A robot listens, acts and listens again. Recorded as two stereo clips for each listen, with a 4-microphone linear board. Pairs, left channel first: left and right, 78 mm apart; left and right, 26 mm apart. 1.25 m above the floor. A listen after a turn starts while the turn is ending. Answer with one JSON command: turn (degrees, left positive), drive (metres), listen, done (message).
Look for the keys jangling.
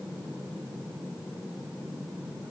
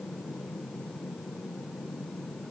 {"listen": true}
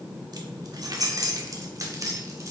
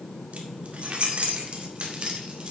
{"turn": -40}
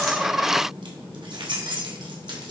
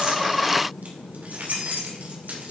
{"turn": -110}
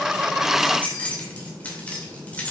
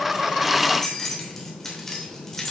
{"turn": 15}
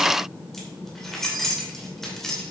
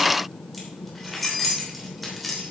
{"done": "Found it: keys jangling, straight ahead."}